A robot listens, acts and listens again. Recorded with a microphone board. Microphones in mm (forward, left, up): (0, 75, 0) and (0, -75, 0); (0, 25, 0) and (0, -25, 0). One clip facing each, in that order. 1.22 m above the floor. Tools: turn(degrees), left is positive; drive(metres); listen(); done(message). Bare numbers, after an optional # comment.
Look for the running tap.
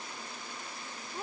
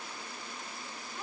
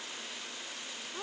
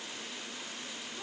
listen()
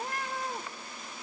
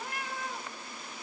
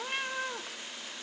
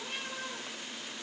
listen()
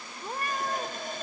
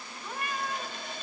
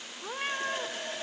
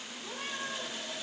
# The running tap: about 45° left or 135° left.
turn(45)
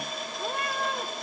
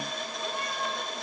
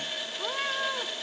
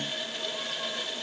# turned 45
done("Facing the running tap, 1 to 2 m away.")